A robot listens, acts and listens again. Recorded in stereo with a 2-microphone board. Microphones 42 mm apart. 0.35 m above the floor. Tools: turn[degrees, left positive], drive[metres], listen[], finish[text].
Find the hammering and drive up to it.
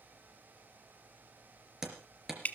Action: turn[-30]
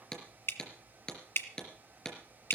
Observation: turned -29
Thought: So it is at 20° left.
Action: turn[20]
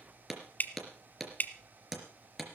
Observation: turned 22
Action: drive[1.0]
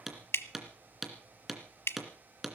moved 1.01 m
Action: drive[1.0]
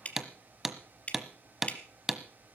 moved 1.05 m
Action: drive[1.0]
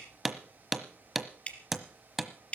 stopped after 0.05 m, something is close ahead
Action: finish[I am next to the hammering.]